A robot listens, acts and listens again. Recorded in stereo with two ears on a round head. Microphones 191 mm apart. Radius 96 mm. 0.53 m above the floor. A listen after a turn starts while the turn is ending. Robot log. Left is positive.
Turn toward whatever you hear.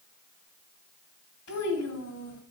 cmd yaw +90
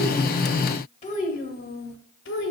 note: So it is at 65° left.
cmd yaw +65
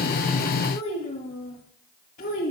note: The child speaking is now 40° left.
cmd yaw +40
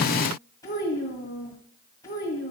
note: The child speaking is now 15° left.
cmd yaw +15
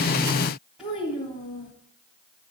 end: Facing the child speaking, 2 to 4 m away.